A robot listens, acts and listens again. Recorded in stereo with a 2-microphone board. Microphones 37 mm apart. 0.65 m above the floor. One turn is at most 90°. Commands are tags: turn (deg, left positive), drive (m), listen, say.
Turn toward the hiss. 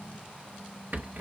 <listen/>
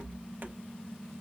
<listen/>
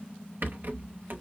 <say>I can't make out a hiss to turn to.</say>